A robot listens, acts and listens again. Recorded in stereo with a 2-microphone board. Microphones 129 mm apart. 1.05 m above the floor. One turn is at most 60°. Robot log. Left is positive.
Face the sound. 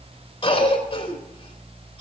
note: The cough: about 40° left or 140° left.
cmd yaw +40
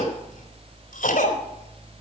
note: So it is at 100° left.
cmd yaw +60
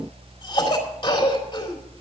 note: The cough is now 35° left.
cmd yaw +35
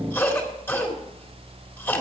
note: The cough is now 15° left.
cmd yaw +15
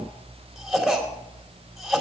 end: Facing the cough.